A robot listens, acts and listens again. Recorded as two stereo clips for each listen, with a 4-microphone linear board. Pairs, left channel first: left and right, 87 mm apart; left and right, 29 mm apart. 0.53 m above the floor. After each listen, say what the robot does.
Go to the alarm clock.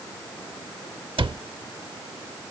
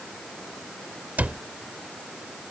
Keep listening.
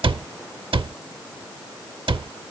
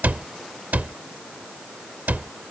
Keep listening.
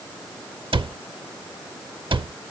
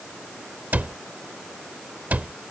I can't make out an alarm clock, only a cupboard door.